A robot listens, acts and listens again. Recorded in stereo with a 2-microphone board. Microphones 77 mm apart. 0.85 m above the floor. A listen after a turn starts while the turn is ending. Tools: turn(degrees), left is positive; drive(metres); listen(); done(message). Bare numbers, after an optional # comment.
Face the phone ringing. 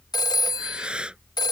# The phone ringing: about 60° left or 120° left.
turn(60)
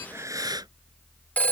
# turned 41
# So it is at 20° left.
turn(20)
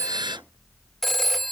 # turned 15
done("Found it: a phone ringing, straight ahead.")